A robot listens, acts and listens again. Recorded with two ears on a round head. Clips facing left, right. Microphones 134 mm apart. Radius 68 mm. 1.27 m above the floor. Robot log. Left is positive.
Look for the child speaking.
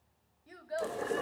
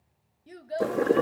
note: The child speaking: about 30° right or 150° right.
cmd yaw -30
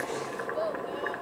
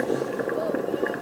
cmd idle
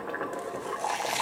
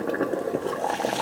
cmd idle
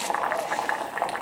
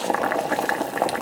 end: I heard a child speaking, but can't make it out now. It was about straight ahead or 120° right.